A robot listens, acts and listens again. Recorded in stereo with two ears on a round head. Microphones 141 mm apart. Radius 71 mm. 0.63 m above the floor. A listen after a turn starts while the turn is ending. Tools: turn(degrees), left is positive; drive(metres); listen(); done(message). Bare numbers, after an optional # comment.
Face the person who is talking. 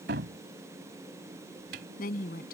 # The woman speaking: about 65° left or 115° left.
turn(65)
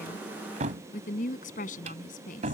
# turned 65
# So it is at 55° left.
turn(55)
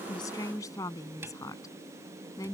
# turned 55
# The woman speaking is now 20° left.
turn(20)
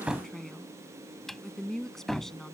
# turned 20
done("Found it: a woman speaking, straight ahead.")